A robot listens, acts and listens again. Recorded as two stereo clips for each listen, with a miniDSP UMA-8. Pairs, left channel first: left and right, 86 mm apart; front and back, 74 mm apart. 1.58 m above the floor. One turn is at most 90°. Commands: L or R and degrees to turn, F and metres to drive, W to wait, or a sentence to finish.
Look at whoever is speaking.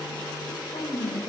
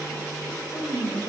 L65
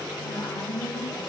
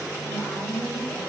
L40
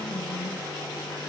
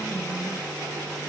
W
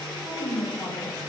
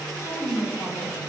L20
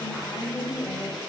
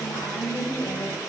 Found it: a woman speaking, straight ahead.